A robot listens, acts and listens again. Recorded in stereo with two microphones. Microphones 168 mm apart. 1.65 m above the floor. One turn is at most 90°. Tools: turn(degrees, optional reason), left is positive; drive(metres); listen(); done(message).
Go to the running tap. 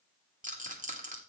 listen()
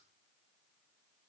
listen()
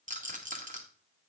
done("I can't make out a running tap to turn to.")